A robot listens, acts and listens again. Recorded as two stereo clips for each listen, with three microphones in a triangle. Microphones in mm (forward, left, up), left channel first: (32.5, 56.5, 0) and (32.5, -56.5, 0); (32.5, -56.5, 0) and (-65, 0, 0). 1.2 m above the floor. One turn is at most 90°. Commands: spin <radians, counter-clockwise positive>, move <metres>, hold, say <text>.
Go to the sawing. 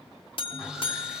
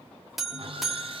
spin -1.57
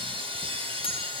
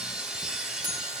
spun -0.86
spin -1.57
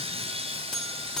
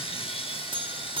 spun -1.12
spin -1.05
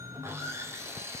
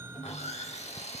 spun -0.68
spin -0.44
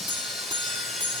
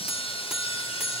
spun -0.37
move 1.0
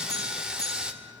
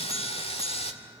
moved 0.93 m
move 1.0
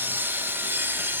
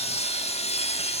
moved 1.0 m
spin -0.35
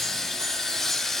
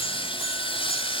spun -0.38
move 1.0
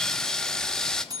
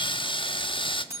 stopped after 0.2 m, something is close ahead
say I am next to the sawing.